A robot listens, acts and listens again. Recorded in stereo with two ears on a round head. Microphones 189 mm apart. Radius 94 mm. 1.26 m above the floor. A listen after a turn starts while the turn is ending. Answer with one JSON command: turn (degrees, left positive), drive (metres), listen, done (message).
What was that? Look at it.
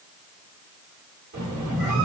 {"turn": -40}
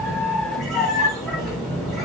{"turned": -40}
{"done": "Found it: a squeak, straight ahead."}